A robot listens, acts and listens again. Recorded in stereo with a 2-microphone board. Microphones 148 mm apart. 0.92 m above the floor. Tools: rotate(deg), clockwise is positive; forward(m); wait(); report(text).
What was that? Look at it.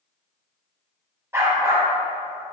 rotate(20)
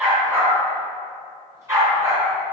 rotate(20)
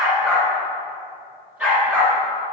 rotate(30)
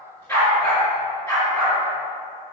rotate(-20)
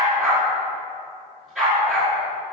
report("Found it: a dog barking, straight ahead.")